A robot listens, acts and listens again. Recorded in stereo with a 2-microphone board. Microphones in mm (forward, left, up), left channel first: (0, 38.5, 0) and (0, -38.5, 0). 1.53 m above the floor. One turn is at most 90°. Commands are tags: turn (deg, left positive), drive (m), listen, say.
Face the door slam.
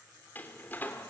<turn deg="25"/>
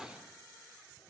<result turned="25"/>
<say>Found it: a door slam, straight ahead, 2 to 4 m away.</say>